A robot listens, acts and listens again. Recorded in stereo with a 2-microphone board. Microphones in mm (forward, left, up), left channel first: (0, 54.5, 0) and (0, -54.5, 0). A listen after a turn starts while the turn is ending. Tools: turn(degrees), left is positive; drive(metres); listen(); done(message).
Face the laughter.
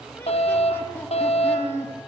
turn(degrees=20)
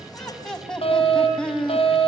turn(degrees=30)
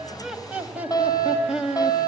done("Found it: laughter, straight ahead.")